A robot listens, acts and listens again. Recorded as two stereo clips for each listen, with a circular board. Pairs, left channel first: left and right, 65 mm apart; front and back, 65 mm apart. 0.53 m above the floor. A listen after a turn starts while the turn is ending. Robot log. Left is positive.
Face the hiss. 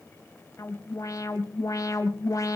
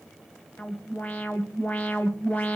cmd idle
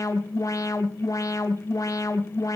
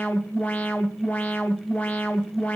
cmd idle
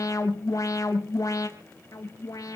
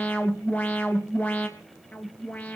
end: I can't make out a hiss, only an alarm.